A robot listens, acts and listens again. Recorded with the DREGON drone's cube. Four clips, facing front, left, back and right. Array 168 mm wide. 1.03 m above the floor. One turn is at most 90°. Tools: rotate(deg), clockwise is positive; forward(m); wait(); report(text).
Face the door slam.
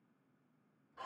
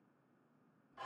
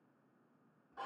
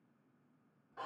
wait()
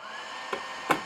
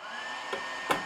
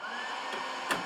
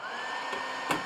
rotate(-10)
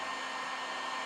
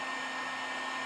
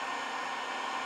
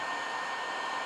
report("Facing where the door slam came from. I can't hear it now.")